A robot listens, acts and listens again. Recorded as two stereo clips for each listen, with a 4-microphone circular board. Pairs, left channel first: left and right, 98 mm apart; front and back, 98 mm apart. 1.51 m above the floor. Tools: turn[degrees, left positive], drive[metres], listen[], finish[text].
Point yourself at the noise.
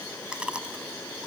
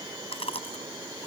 Thought: The chewing: 10° right.
Action: turn[-10]
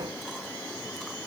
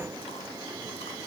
Action: listen[]
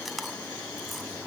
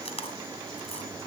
Action: finish[Facing the chewing.]